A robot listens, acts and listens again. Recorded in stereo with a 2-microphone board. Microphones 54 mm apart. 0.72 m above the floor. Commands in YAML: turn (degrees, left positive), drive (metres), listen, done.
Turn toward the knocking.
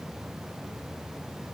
listen: true
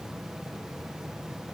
listen: true
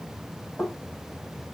turn: 50
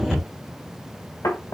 turn: 80
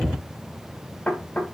turn: 30
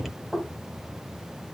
done: "Found it: knocking, straight ahead."